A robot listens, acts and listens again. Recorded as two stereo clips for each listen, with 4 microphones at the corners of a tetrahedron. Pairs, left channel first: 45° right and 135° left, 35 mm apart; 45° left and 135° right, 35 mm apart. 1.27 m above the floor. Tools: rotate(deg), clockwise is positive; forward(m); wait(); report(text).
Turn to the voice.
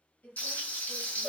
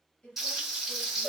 rotate(10)
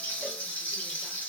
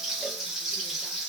wait()
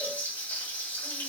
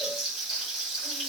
wait()
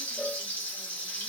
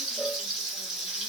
report("I heard a woman speaking from this way, but can't make it out now.")